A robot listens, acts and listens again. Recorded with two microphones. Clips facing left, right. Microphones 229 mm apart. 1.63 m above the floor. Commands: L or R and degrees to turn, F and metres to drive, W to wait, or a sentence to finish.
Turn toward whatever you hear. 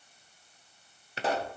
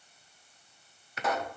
L30
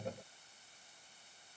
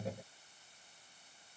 W
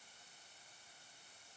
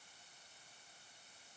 I heard a pop, but can't make it out now. It was about straight ahead or 120° left.